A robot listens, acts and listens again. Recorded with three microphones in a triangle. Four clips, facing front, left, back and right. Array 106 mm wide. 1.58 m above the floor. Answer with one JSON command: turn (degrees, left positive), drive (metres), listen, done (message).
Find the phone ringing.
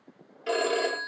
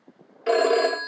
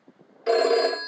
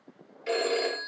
{"turn": 110}
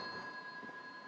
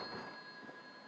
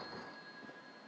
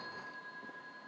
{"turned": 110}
{"listen": true}
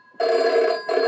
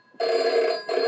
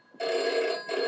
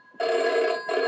{"done": "Found it: a phone ringing, straight ahead."}